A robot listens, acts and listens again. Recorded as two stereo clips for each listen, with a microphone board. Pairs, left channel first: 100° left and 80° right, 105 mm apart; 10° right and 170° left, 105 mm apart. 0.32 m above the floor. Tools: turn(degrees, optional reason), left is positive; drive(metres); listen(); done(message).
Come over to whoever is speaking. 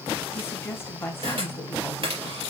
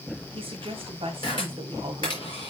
turn(degrees=160, reason="The woman speaking: 160° left.")
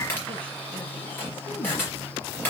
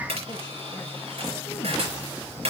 listen()
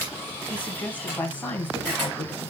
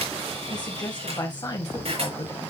turn(degrees=30, reason="The woman speaking is now 30° left.")
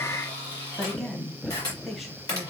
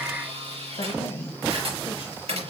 turn(degrees=10, reason="The woman speaking is now 10° left.")
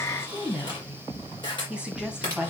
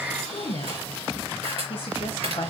drive(metres=1.0)
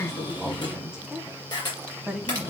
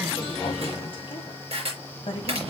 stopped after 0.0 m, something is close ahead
done("Blocked. The woman speaking is further on, straight ahead.")